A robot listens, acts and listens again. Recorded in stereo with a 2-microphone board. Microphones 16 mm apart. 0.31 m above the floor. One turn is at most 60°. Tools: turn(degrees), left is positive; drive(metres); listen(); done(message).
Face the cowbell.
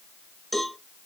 turn(degrees=30)
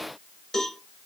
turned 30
turn(degrees=60)
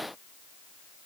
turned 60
turn(degrees=60)
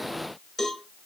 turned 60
turn(degrees=25)
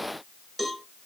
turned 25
done("Found it: a cowbell, straight ahead.")